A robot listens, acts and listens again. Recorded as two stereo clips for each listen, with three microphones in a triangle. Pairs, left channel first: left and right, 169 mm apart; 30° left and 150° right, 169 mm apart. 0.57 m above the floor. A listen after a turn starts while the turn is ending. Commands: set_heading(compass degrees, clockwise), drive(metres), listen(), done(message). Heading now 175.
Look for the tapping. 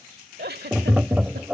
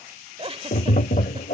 set_heading(185)
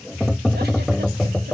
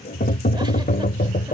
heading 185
done("Facing the tapping.")